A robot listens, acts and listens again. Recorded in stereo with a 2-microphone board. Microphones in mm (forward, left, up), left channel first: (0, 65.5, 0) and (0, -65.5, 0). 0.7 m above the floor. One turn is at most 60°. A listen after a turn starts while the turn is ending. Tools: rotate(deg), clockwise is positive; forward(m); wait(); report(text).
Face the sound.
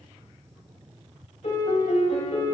rotate(-55)
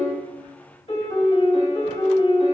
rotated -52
rotate(-60)
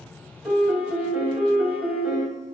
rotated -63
report("Facing the piano, 2 to 4 m away.")